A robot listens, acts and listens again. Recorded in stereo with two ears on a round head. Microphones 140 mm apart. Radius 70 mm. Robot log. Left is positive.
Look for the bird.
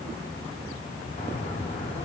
note: The bird: about 45° left or 135° left.
cmd yaw +45
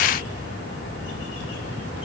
note: So it is at 90° left.
cmd yaw +90
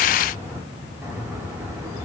note: The bird is now 15° right.
cmd yaw -15
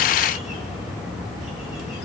end: Found it: a bird, straight ahead.